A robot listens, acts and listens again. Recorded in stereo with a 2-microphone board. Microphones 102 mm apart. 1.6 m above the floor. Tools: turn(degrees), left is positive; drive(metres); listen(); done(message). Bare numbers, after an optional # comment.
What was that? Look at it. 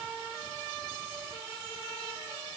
listen()
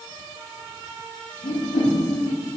turn(90)
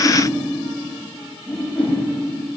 # So it is at 10° left.
turn(10)
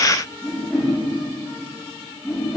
done("Facing the whoosh.")